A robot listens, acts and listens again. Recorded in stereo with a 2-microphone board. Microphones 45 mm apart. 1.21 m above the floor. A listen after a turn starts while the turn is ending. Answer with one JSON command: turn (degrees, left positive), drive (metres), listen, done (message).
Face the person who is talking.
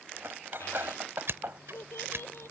{"turn": 90}
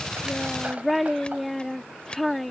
{"done": "Found it: a child speaking, straight ahead."}